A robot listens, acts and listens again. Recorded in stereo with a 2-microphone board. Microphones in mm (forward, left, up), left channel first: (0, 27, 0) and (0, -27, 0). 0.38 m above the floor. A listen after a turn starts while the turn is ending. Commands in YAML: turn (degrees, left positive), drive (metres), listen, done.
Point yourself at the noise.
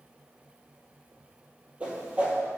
turn: -25
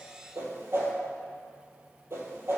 turn: -130
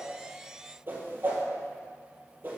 turn: -40
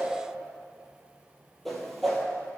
done: "Facing the whoosh, 1 to 2 m away."